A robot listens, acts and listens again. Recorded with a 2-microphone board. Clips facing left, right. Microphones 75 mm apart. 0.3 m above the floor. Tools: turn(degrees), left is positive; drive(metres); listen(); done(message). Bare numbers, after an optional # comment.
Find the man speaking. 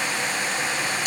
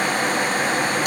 listen()
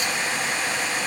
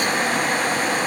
listen()
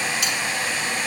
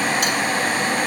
done("I can't make out a man speaking to turn to.")